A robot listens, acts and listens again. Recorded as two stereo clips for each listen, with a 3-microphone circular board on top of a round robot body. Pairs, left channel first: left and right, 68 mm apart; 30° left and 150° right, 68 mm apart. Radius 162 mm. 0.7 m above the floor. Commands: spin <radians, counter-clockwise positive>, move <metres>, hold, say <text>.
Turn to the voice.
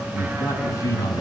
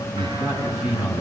spin 2.27
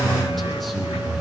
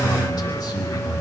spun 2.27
say Found it: a man speaking, straight ahead.